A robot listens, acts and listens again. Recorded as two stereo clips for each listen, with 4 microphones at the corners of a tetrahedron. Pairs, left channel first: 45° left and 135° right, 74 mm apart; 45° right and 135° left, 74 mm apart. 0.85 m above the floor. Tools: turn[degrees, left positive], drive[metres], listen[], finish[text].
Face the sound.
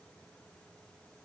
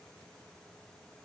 Action: listen[]
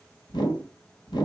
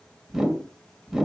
Thought: The whoosh: 50° left.
Action: turn[50]
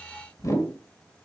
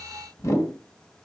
Action: finish[Found it: a whoosh, straight ahead.]